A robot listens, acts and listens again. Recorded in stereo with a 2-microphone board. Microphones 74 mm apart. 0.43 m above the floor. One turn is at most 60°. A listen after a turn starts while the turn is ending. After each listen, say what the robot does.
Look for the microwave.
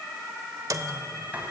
Turn 55° right.
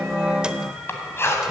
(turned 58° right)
Keep listening.
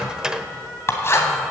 Turn 15° right.
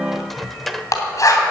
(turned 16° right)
Found it: a microwave, straight ahead, under 1 m away.